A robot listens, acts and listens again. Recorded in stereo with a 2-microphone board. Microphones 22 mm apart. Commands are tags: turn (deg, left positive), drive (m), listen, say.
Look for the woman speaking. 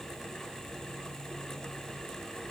<listen/>
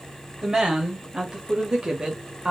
<turn deg="-35"/>
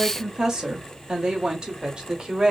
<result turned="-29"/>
<turn deg="-35"/>
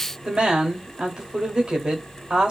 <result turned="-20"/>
<turn deg="-40"/>
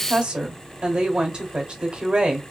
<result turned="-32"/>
<turn deg="-40"/>
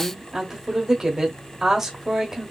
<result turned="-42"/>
<turn deg="-20"/>
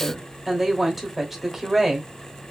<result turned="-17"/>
<say>Facing the woman speaking, 1 to 2 m away.</say>